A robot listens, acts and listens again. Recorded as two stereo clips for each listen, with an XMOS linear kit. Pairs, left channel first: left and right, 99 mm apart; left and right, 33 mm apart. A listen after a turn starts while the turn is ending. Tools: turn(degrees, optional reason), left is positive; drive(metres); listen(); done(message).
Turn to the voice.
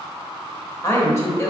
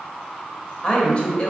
turn(degrees=30, reason="The woman speaking: about 30° left or 150° left.")
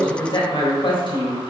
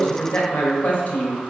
turn(degrees=115, reason="So it is at 115° left.")
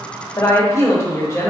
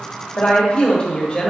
turn(degrees=35, reason="The woman speaking is now 35° left.")
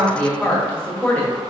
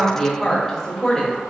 turn(degrees=15, reason="The woman speaking is now 15° left.")
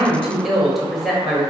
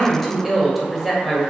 done("Found it: a woman speaking, straight ahead, 1 to 2 m away.")